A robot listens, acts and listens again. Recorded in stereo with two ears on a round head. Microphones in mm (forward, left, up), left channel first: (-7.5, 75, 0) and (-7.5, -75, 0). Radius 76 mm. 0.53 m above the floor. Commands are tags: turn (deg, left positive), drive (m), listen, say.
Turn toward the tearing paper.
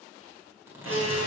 <turn deg="-30"/>
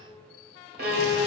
<listen/>
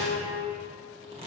<turn deg="-135"/>
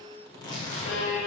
<turn deg="30"/>
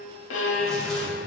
<listen/>
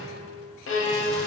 <listen/>
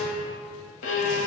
<say>Facing where the tearing paper came from. I can't hear it now.</say>